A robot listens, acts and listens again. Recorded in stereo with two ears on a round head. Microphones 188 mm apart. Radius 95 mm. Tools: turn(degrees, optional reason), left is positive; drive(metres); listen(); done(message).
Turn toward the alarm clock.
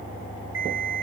turn(degrees=-65, reason="The alarm clock: about 65° right or 115° right.")
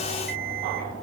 turn(degrees=-45, reason="So it is at 45° right.")
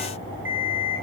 turn(degrees=-10, reason="The alarm clock is now 10° right.")
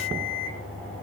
done("Facing the alarm clock.")